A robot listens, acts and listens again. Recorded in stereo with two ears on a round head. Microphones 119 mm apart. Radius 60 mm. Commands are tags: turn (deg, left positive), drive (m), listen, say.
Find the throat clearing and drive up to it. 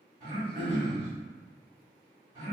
<turn deg="-35"/>
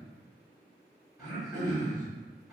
<drive m="1.0"/>
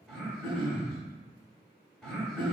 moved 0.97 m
<drive m="1.0"/>
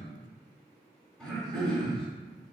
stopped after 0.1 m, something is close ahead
<say>Arrived at the throat clearing, straight ahead.</say>